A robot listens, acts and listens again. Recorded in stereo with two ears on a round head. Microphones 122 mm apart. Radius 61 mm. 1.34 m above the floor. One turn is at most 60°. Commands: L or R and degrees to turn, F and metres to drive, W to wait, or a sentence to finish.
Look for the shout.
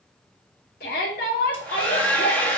L60
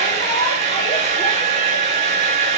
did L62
W
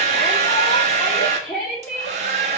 Facing the shout.